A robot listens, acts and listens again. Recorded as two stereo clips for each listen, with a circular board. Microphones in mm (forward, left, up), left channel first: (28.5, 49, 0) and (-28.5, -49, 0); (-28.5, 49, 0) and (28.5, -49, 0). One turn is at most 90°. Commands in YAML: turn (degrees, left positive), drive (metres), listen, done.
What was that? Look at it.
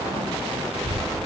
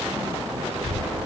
turn: 75
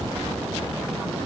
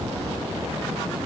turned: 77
turn: -10
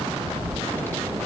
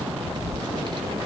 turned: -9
turn: -15
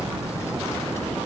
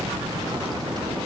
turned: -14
turn: -10
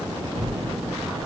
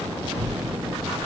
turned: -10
done: "Found it: a child speaking, straight ahead."